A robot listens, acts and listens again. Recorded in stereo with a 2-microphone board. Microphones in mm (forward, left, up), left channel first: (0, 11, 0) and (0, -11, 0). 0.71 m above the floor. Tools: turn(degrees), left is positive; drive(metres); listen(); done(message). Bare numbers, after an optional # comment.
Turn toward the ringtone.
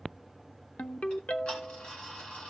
# The ringtone: about 75° left or 105° left.
turn(75)
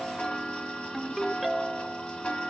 done("Facing the ringtone, under 1 m away.")